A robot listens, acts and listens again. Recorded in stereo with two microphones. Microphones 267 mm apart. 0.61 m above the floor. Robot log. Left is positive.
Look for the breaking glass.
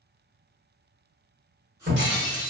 note: The breaking glass: about 45° right or 135° right.
cmd yaw -45
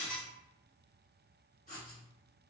end: Facing the breaking glass.